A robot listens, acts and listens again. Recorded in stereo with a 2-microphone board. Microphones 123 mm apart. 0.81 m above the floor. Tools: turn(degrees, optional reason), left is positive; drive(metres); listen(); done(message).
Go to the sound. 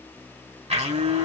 turn(degrees=-60, reason="The blender: about 60° right or 120° right.")
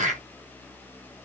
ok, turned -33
turn(degrees=-85, reason="So it is at 85° right.")
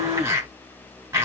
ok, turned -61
turn(degrees=-25, reason="The blender is now 25° right.")
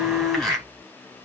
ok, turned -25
drive(metres=1.0)
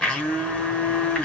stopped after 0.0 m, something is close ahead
done("Something is in my way. I am facing the blender but have not reached it.")